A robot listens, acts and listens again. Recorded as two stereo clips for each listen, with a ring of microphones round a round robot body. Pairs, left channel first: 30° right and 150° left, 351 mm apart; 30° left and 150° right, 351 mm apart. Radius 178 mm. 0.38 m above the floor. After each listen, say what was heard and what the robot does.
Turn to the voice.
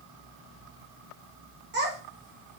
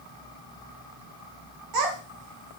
The child speaking: 150° right. Turn 150° right.
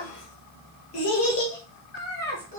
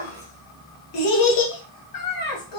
The child speaking is now 35° left. Turn 35° left.
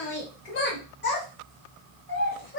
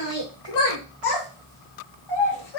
The child speaking is now 30° left. Turn 30° left.
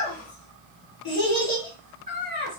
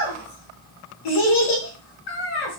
The child speaking is now 25° left. Turn 25° left.
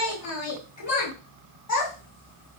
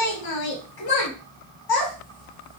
The child speaking is now 10° left. Turn 10° left.
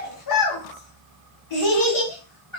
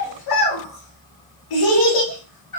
Found it: a child speaking, straight ahead, 1 to 2 m away.